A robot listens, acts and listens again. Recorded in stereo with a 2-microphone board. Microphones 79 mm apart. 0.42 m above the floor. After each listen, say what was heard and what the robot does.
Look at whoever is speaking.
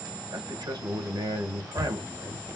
The man speaking: about 65° right or 115° right. Turn 65° right.
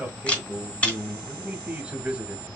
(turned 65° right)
So it is at 15° right. Turn 15° right.
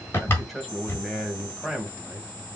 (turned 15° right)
Facing the man speaking, 2 to 4 m away.